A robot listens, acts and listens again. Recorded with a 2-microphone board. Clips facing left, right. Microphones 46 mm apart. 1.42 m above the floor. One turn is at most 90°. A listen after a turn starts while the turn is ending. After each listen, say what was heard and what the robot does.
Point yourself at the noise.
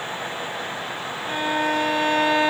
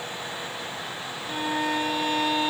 The violin: about 50° left or 130° left. Turn 50° left.
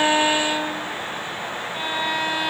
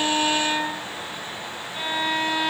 Facing the violin.